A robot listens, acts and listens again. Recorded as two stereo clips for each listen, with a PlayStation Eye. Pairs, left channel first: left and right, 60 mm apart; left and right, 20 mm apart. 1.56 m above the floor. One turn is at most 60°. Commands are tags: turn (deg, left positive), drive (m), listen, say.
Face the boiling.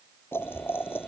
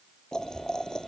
<turn deg="40"/>
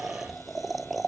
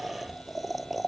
<say>Facing the boiling.</say>